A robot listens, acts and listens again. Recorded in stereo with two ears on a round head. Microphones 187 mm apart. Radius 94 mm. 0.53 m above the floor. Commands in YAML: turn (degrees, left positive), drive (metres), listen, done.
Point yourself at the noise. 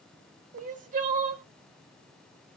turn: -35
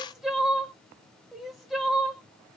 done: "Found it: crying, straight ahead, under 1 m away."